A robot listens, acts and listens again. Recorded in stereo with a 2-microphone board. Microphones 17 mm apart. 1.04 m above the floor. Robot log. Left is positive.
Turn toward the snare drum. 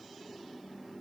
cmd idle
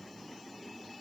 cmd idle
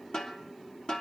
note: The snare drum: about 55° left or 125° left.
cmd yaw +55
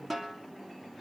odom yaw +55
end: Facing the snare drum, 2 to 4 m away.